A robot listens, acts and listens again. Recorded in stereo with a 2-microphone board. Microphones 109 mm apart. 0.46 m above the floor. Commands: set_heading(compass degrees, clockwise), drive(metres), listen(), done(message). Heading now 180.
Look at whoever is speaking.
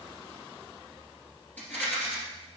listen()
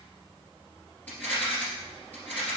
listen()
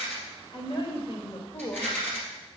set_heading(135)
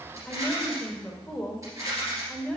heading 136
set_heading(121)
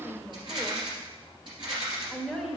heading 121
done("Found it: a woman speaking, straight ahead, 1 to 2 m away.")